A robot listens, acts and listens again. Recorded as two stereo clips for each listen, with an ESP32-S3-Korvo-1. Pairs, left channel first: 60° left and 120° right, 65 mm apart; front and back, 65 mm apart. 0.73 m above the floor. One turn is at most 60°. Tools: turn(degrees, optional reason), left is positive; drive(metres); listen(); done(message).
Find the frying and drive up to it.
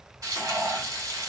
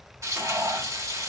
turn(degrees=-60, reason="The frying: 145° right.")
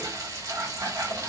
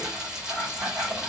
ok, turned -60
turn(degrees=-60, reason="The frying is now 100° right.")
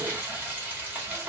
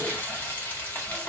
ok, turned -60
turn(degrees=-55, reason="The frying is now 55° right.")
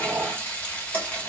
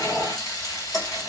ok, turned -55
drive(metres=1.0)
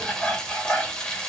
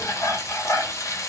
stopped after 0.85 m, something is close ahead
turn(degrees=-10, reason="The frying is now 10° right.")
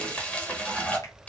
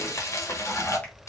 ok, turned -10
done("Arrived at the frying, straight ahead.")